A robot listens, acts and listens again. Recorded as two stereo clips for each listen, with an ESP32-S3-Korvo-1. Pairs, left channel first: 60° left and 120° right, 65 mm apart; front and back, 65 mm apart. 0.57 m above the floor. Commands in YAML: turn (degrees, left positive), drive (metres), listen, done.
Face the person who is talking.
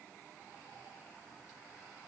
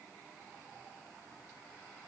listen: true
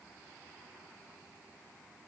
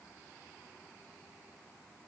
listen: true
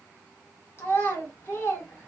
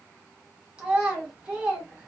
turn: 110
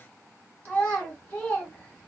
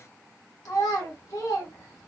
done: "Facing the child speaking, 1 to 2 m away."